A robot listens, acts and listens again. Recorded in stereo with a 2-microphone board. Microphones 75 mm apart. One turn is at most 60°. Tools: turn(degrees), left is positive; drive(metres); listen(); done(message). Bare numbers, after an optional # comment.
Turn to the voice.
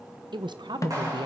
turn(-60)
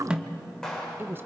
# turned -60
# So it is at 30° right.
turn(-30)
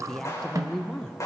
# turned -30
# The woman speaking is now 10° left.
turn(10)
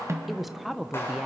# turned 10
done("Facing the woman speaking, under 1 m away.")